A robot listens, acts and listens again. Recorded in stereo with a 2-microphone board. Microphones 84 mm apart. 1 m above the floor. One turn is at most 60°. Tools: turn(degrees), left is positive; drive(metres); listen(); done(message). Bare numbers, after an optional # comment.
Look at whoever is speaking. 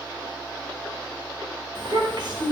# The child speaking: about 70° right or 110° right.
turn(-60)
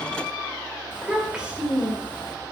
# So it is at 10° right.
turn(-10)
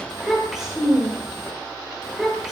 done("Facing the child speaking, 2 to 4 m away.")